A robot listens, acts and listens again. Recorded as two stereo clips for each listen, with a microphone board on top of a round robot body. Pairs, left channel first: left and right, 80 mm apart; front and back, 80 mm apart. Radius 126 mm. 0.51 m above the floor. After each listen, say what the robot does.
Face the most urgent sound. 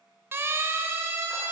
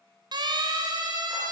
Turn 150° right.
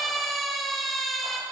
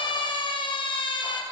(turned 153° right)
Found it: a siren, straight ahead.